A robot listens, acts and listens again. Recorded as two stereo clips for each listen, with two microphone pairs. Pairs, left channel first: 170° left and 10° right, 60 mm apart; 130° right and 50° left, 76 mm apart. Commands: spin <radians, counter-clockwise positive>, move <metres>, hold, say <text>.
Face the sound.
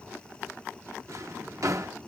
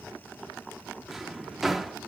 spin -0.70
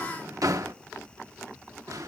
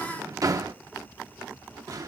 spin 0.17
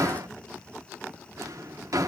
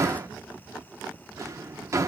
say Found it: a drawer, straight ahead, under 1 m away.